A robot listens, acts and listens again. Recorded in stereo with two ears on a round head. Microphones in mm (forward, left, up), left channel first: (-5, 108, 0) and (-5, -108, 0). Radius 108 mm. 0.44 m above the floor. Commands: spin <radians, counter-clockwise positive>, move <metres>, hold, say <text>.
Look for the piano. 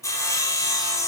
hold
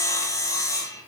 hold
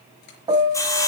spin -0.35
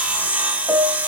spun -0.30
say Found it: a piano, straight ahead, 1 to 2 m away.